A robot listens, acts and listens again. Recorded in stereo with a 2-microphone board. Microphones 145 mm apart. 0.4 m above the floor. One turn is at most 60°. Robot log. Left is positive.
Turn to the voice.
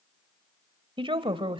note: The woman speaking: about 35° right or 145° right.
cmd yaw -35
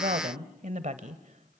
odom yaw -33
note: So it is at 100° right.
cmd yaw -60
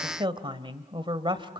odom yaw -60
note: The woman speaking is now 40° right.
cmd yaw -40
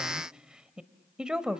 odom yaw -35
end: Facing the woman speaking.